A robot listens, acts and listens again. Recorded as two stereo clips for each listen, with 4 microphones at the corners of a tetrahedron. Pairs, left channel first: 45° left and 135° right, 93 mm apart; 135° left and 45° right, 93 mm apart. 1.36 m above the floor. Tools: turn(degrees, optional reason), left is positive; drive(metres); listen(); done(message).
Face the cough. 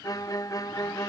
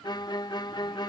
listen()
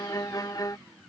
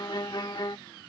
listen()
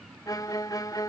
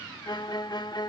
done("I can't make out a cough, only a violin.")